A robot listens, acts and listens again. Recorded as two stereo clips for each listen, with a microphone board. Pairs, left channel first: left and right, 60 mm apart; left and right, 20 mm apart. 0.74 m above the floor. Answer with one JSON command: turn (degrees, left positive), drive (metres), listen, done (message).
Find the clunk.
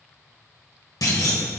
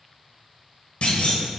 {"turn": 90}
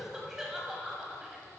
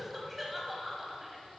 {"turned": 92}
{"done": "I heard a clunk from this way, but can't make it out now."}